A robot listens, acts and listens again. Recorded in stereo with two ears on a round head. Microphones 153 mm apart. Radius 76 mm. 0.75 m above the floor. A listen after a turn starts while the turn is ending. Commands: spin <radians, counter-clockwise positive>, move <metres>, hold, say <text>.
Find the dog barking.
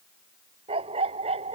spin -0.61
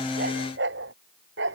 spin -1.75
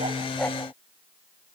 hold
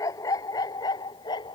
spin 0.44
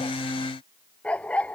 say Facing the dog barking.